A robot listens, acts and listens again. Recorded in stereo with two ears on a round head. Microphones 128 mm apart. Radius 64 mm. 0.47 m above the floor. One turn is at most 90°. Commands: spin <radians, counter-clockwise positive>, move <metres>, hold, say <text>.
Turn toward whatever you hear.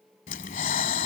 spin 1.05
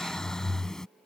say Facing the breathing.